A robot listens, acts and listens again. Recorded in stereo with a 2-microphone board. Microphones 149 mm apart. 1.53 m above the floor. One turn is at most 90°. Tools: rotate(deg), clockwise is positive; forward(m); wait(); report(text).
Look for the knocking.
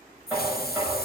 rotate(30)
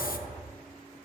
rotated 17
rotate(90)
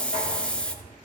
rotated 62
rotate(90)
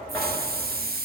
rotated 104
rotate(-15)
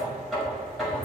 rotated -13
report("Facing the knocking.")